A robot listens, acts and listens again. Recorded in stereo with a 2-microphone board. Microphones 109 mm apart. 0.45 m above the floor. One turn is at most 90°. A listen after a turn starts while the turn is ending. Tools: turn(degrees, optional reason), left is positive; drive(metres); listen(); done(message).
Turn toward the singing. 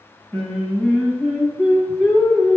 turn(degrees=-30)
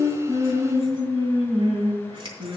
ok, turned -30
turn(degrees=-90, reason="So it is at 125° right.")
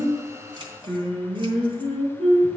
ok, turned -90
turn(degrees=-55, reason="The singing is now 55° right.")
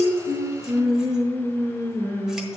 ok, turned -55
done("Facing the singing, over 4 m away.")